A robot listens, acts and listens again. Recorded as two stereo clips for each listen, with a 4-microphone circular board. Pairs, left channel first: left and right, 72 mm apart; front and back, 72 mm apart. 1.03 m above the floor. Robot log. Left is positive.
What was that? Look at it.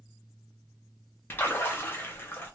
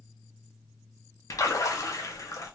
note: The splash: 35° left.
cmd yaw +35
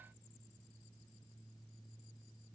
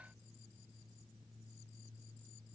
end: I heard a splash from this way, but can't make it out now.